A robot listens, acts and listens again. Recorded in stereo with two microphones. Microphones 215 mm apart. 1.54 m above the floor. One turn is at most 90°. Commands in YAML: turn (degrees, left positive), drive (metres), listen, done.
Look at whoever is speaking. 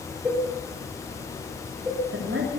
turn: -90
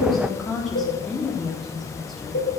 done: "Facing the woman speaking, 2 to 4 m away."